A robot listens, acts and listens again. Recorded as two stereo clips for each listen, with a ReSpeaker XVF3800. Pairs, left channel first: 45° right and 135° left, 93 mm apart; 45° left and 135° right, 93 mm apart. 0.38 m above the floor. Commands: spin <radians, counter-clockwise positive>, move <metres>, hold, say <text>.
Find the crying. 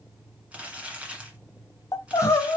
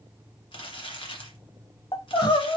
spin 0.17
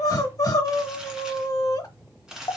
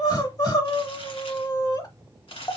say Found it: crying, straight ahead, 1 to 2 m away.